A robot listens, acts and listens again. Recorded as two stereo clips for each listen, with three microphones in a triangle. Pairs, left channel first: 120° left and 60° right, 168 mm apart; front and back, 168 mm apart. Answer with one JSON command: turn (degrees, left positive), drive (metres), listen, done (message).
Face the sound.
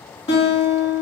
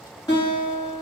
{"turn": 65}
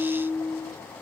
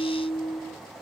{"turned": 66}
{"done": "Facing the guitar."}